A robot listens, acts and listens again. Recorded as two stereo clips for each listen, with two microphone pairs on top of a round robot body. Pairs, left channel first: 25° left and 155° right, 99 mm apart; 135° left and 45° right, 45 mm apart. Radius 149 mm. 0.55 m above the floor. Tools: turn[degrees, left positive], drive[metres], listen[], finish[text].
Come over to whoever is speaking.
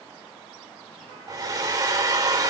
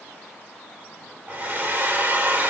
Action: listen[]
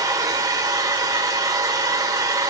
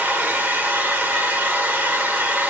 Action: listen[]
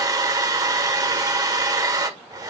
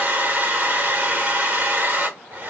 Action: finish[I can't make out anyone speaking, only a hair dryer.]